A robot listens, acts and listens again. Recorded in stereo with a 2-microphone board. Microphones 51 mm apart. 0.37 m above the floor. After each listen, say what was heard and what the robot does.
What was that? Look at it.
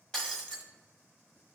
Turn 30° left.
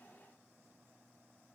Keep listening.
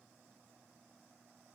I heard breaking glass, but can't make it out now. It was about 15° right or 135° left.